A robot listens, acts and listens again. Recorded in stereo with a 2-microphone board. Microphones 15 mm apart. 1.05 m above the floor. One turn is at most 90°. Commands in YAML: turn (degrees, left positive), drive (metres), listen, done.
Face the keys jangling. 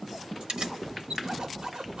turn: -60
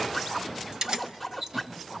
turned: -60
turn: -45
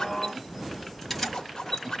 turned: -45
turn: 10
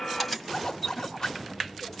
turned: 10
done: "Found it: keys jangling, straight ahead."